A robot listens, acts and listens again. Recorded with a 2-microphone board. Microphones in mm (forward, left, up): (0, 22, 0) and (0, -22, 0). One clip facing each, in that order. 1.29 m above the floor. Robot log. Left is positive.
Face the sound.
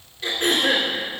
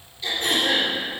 note: The throat clearing: about 60° left or 120° left.
cmd yaw +60
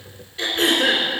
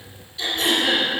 note: So it is at 40° left.
cmd yaw +40
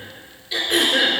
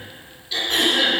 note: The throat clearing is now 10° left.
cmd yaw +10
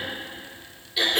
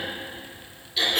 end: Facing the throat clearing, 2 to 4 m away.